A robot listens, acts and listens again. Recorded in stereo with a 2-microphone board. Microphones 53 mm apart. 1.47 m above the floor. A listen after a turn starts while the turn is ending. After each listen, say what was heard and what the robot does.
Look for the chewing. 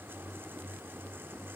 Keep listening.
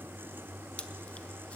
The chewing: about 25° left or 155° left. Turn 25° left.
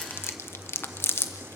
So it is at 130° left. Turn 130° left.
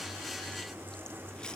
Keep listening.
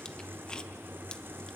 Keep listening.
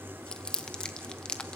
The chewing is now 15° left. Turn 15° left.
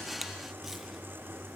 Keep listening.
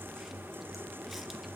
Keep listening.
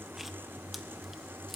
Facing where the chewing came from. I can't hear it now.